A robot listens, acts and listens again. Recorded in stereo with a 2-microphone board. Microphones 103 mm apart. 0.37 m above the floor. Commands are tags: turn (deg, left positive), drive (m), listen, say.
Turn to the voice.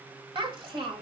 <turn deg="-65"/>
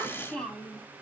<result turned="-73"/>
<turn deg="10"/>
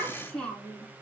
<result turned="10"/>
<turn deg="15"/>
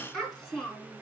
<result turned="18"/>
<say>Facing the child speaking, 2 to 4 m away.</say>